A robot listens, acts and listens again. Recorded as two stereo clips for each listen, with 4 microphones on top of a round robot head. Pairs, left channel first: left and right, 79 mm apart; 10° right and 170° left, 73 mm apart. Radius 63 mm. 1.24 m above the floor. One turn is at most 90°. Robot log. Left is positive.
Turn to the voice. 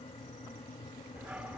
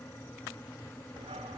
cmd idle
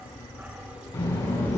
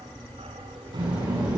note: The child speaking: 145° left.
cmd yaw +90
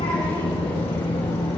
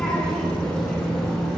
note: The child speaking is now 70° left.
cmd yaw +70
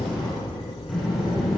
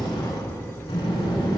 end: Found it: a child speaking, straight ahead, over 4 m away.